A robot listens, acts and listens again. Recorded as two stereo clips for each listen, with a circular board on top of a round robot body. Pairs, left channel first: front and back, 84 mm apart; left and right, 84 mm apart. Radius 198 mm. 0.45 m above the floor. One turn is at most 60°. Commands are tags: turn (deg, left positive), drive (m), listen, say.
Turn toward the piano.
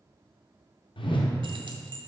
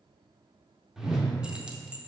<listen/>
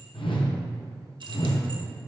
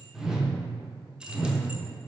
<listen/>
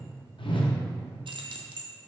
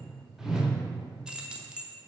<say>I can't make out a piano to turn to.</say>